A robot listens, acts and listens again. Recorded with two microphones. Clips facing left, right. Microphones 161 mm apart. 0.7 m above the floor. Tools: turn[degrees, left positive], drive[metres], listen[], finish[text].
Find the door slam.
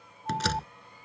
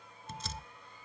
Action: turn[90]
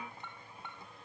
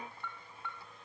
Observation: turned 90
Action: finish[I heard a door slam from this way, but can't make it out now.]